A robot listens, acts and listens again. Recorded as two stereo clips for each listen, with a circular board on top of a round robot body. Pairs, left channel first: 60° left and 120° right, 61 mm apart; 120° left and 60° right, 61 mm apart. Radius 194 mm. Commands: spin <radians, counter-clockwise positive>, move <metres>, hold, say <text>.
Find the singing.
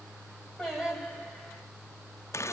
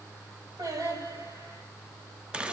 spin -0.70
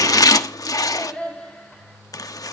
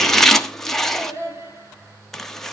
spin -0.35
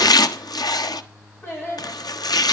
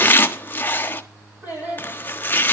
say Facing the singing, over 4 m away.